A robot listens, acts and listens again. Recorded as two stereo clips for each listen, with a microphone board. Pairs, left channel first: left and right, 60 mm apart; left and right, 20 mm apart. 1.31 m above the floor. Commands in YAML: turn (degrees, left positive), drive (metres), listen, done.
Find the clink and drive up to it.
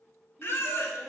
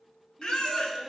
listen: true
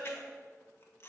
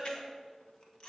listen: true
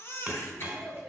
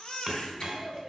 turn: -25
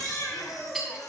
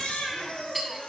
drive: 1.0
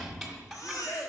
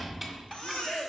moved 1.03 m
drive: 1.0
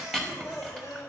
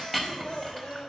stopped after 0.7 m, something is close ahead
done: "I am next to the clink."